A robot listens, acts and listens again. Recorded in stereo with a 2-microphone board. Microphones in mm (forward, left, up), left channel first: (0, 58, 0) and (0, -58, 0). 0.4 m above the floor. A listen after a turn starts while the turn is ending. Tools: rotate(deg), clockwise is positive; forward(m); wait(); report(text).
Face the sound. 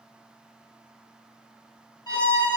rotate(-35)
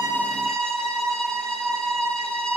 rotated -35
report("Facing the violin.")